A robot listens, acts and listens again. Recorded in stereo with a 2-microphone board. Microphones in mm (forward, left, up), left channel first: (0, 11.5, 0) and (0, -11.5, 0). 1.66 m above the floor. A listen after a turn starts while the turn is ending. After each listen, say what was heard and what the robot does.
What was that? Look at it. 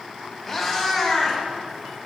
Turn 30° left.
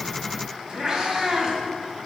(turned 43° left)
So it is at 40° right. Turn 40° right.
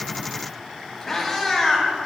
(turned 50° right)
The cat meowing is now 10° left. Turn 10° left.
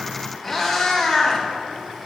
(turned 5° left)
Found it: a cat meowing, straight ahead, 2 to 4 m away.